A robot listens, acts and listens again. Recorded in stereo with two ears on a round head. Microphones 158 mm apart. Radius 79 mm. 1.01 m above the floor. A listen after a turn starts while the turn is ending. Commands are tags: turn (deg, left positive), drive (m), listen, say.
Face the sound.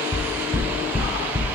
<turn deg="-30"/>
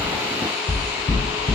<turn deg="25"/>
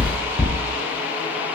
<turn deg="20"/>
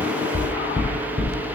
<say>Found it: knocking, straight ahead, 2 to 4 m away.</say>